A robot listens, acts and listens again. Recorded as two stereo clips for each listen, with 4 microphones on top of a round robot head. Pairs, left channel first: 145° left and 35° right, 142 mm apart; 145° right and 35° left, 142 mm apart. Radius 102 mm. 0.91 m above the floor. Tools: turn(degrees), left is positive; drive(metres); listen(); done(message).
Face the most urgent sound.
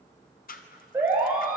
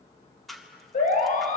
turn(degrees=-110)
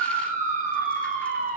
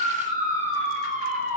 done("Facing the siren.")